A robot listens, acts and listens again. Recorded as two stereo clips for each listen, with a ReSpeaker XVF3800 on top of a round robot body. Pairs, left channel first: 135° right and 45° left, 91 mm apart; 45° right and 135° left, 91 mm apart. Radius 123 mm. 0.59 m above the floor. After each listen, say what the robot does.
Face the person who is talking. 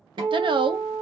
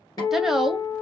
Turn 50° left.
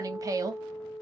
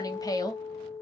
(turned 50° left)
Found it: a woman speaking, straight ahead.